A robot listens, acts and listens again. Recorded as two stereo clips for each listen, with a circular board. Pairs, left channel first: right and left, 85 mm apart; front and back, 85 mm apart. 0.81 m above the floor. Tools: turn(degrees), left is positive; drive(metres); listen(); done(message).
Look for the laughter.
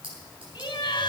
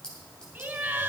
turn(degrees=-115)
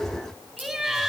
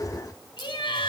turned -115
done("Facing the laughter.")